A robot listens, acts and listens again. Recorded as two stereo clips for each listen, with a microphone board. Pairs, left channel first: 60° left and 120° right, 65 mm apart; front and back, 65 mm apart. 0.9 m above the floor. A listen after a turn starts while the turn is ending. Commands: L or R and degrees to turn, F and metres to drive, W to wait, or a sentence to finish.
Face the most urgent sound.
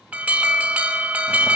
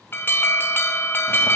R55
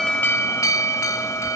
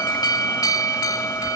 L20
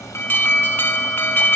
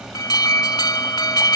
Facing the alarm, 2 to 4 m away.